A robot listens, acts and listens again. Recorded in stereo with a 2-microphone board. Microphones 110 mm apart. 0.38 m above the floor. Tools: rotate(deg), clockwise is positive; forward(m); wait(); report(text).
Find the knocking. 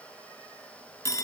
wait()
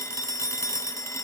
wait()
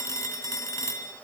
report("I can't make out knocking to turn to.")